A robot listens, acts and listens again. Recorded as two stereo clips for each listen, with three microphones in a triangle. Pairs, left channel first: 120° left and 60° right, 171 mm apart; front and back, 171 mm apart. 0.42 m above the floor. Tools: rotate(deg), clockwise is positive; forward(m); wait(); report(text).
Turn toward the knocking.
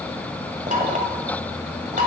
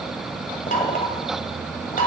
rotate(25)
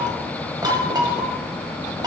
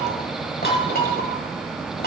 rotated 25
report("Found it: knocking, straight ahead, 1 to 2 m away.")